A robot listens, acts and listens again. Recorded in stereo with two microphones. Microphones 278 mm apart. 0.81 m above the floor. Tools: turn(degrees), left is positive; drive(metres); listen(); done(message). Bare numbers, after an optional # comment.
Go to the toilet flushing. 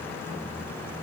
listen()
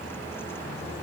listen()
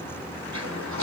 turn(-90)
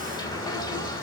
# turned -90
# So it is at 15° left.
turn(15)
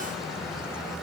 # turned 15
listen()
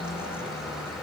listen()
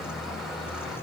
done("Facing where the toilet flushing came from. I can't hear it now. I did not reach it.")